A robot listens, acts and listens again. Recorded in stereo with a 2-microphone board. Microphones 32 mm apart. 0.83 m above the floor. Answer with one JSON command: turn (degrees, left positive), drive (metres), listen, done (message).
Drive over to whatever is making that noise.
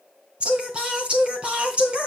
{"turn": -35}
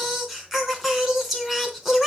{"drive": 1.0}
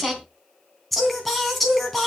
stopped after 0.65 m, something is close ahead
{"done": "Something is in my way. I am facing the singing but have not reached it."}